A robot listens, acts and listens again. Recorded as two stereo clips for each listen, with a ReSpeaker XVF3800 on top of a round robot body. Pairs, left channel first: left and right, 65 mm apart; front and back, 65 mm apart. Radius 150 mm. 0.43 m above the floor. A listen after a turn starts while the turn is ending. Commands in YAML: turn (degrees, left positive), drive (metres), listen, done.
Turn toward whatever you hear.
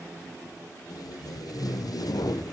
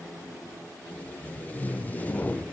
turn: 65
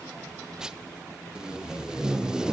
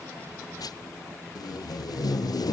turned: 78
turn: -10
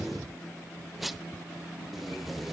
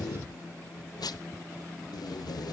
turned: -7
done: "Found it: tape being pulled, straight ahead, under 1 m away."